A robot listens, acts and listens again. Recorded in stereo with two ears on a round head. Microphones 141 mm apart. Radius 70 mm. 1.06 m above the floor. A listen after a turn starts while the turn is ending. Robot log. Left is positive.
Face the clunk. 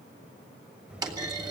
note: The clunk: about 25° right or 155° right.
cmd yaw -25
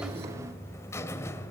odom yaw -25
cmd idle
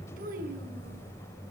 end: I heard a clunk, but can't make it out now. It was about straight ahead or 130° right.